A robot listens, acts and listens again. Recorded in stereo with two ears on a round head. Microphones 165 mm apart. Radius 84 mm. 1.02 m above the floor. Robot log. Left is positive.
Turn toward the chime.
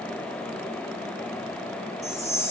note: The chime: about 15° right or 165° right.
cmd yaw -15
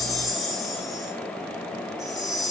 end: Found it: a chime, straight ahead, 2 to 4 m away.